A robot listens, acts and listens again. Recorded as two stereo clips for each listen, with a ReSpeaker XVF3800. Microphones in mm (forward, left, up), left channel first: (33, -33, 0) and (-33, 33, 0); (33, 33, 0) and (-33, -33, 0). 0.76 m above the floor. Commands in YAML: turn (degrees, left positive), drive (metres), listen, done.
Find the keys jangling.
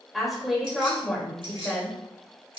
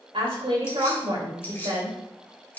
turn: 115
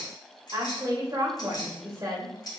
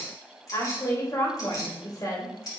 done: "Facing the keys jangling, 2 to 4 m away."